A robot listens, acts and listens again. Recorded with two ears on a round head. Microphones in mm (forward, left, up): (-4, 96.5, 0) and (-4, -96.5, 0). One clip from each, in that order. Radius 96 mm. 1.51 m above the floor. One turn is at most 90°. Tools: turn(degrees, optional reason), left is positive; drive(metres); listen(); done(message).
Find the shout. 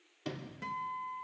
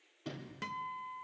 listen()
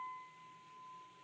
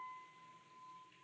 listen()
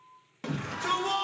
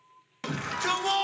turn(degrees=-45, reason="The shout: about 45° right or 135° right.")
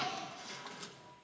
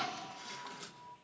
done("Facing the shout, 1 to 2 m away.")